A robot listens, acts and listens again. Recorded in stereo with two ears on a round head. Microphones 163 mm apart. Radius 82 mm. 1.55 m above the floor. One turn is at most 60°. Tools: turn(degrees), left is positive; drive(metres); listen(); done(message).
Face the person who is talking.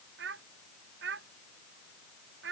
turn(degrees=-60)
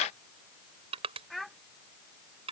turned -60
done("Found it: a child speaking, straight ahead.")